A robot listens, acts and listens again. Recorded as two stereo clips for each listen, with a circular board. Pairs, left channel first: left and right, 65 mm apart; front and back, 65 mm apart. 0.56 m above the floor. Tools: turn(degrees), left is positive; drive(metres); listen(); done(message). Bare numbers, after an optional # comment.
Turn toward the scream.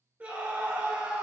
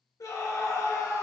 # The scream: 20° right.
turn(-20)
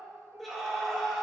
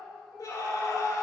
done("Facing the scream, 1 to 2 m away.")